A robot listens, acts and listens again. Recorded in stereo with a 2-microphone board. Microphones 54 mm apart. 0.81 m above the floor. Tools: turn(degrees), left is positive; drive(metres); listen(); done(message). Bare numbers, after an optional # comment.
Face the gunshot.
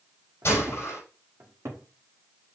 # The gunshot: about 50° left or 130° left.
turn(50)
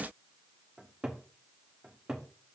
listen()
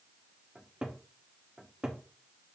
done("I heard a gunshot, but can't make it out now. It was about straight ahead or 80° left.")